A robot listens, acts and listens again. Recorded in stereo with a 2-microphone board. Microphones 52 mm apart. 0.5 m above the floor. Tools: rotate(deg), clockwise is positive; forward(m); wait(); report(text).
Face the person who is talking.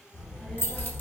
rotate(-20)
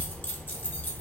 rotate(-135)
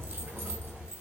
rotate(35)
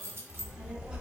rotate(20)
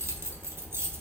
report("Found it: a child speaking, straight ahead.")